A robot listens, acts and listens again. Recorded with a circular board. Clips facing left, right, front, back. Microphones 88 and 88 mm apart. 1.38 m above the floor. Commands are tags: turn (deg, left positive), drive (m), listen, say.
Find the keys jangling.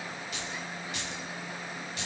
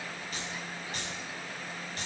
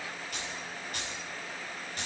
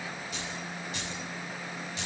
<turn deg="-40"/>
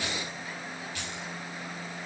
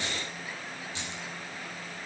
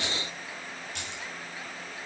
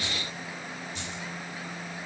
<turn deg="-25"/>
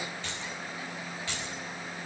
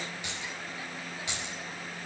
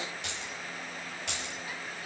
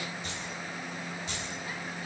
<turn deg="-20"/>
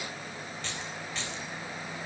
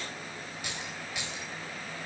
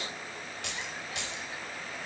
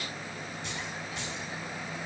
<turn deg="-15"/>
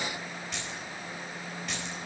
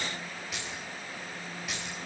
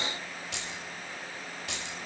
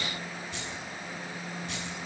<say>Facing the keys jangling.</say>